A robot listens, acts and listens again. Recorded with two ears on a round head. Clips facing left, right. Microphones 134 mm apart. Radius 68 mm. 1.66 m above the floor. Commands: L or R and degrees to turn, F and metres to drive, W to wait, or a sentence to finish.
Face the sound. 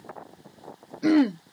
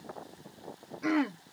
L40
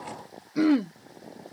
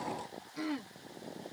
L100
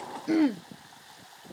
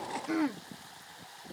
L35
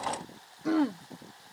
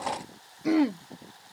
R15
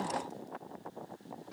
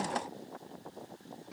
Facing the throat clearing.